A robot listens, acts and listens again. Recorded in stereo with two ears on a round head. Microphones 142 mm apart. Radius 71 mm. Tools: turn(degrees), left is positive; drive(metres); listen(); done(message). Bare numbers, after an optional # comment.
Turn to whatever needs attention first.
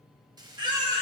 # The baby crying: about 30° right or 150° right.
turn(-30)
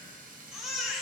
done("Found it: a baby crying, straight ahead.")